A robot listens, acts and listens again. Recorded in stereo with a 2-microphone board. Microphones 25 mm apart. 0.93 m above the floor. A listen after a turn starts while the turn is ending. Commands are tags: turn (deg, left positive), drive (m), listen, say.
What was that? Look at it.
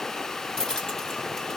<turn deg="25"/>
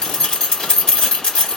<turn deg="135"/>
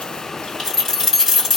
<turn deg="10"/>
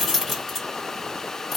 <say>Facing the keys jangling.</say>